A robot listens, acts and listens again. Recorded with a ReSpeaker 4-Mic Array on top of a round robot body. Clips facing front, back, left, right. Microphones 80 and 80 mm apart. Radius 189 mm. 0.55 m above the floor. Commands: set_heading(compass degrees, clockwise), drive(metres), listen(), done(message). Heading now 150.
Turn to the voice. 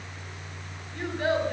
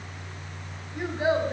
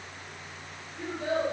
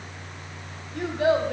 set_heading(255)
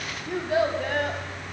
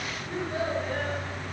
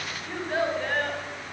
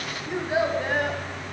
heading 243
set_heading(253)
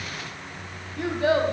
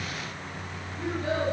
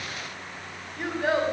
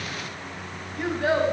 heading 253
done("Facing the child speaking.")